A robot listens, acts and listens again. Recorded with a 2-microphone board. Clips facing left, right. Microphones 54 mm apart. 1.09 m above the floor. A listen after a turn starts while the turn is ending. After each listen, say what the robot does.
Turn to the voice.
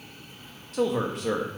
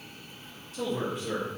Turn 90° left.
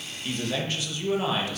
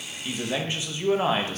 Turn 35° right.
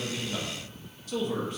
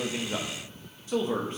Turn 30° right.
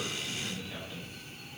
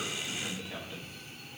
Turn 15° right.
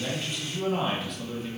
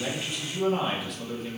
Facing the man speaking.